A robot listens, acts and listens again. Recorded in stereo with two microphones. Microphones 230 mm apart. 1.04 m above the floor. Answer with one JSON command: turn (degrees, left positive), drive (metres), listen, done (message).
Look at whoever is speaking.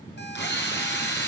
{"listen": true}
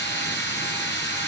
{"listen": true}
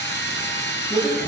{"turn": 15}
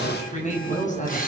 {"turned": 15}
{"turn": 35}
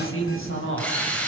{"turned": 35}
{"turn": 105}
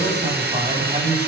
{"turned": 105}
{"turn": -30}
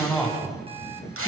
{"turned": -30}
{"done": "Facing the man speaking."}